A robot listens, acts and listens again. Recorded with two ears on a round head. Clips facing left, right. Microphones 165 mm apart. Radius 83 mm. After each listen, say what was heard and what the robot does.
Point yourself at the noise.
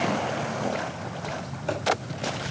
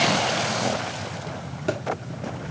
The thud: about 65° right or 115° right. Turn 65° right.
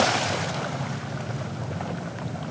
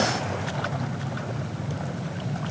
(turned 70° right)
Keep listening.
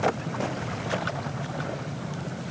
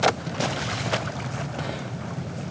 I heard a thud, but can't make it out now. It was about 5° left or 45° right.